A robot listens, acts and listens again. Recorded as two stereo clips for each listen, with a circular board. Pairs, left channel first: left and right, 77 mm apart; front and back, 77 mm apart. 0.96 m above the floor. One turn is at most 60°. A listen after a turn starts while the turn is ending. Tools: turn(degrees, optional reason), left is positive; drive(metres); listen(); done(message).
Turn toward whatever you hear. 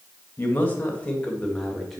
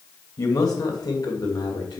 done("Facing the man speaking.")